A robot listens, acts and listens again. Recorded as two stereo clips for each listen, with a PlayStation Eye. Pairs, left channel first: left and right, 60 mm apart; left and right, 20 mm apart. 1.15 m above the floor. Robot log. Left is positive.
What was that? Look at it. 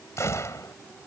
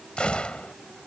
note: The gunshot: about 55° left or 125° left.
cmd yaw +55
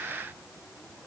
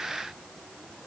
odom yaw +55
cmd idle
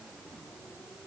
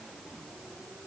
end: I heard a gunshot, but can't make it out now. It was about straight ahead or 70° left.